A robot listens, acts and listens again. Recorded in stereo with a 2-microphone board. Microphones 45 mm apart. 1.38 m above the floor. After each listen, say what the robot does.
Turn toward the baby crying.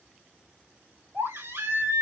Turn 90° right.
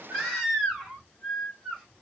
Found it: a baby crying, straight ahead.